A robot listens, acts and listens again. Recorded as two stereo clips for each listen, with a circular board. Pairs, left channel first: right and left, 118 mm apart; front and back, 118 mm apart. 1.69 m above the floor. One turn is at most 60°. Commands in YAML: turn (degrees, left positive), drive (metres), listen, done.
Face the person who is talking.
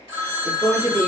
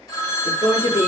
turn: 15
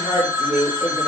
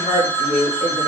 done: "Found it: a woman speaking, straight ahead, 1 to 2 m away."